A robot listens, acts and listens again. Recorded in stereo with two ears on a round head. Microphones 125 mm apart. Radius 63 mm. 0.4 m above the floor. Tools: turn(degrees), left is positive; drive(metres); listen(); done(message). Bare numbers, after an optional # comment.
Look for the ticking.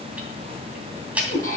turn(-30)
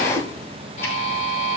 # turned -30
listen()
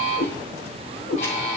listen()
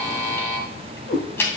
# So it is at 15° left.
turn(15)
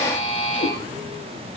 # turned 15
listen()
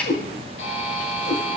# The ticking is now 10° left.
turn(10)
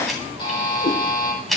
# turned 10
done("Facing the ticking, 2 to 4 m away.")